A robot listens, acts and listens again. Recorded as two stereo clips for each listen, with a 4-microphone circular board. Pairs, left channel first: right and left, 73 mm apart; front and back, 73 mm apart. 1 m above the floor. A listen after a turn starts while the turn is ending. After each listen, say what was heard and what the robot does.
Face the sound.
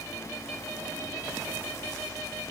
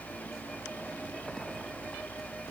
Keep listening.
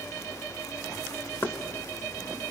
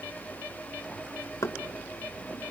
The knocking: 35° right. Turn 35° right.
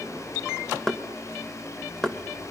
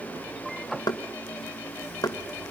Found it: knocking, straight ahead, under 1 m away.